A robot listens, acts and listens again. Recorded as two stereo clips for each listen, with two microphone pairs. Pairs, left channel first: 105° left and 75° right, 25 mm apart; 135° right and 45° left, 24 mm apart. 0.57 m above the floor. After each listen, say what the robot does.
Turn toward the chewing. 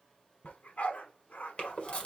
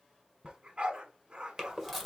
Turn 140° left.
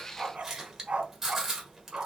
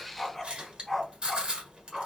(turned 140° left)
Found it: chewing, straight ahead.